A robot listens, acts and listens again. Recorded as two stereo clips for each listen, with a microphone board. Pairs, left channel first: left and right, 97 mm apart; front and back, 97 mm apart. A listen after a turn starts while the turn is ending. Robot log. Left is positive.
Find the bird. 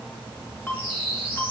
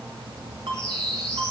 note: The bird: 80° left.
cmd yaw +80
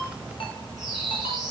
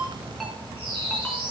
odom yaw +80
end: Found it: a bird, straight ahead, 2 to 4 m away.